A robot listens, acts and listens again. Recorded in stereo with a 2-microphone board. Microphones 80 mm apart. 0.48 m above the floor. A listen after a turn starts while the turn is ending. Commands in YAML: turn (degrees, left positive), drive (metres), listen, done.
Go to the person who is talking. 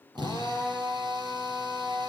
listen: true
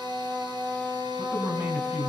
turn: -25
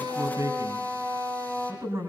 turn: -135
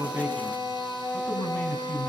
turn: 20
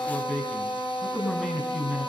turn: 10
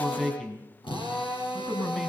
drive: 1.0
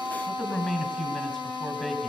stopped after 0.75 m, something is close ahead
turn: 10
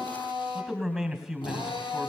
done: "Something is in my way. I am facing the man speaking but have not reached it."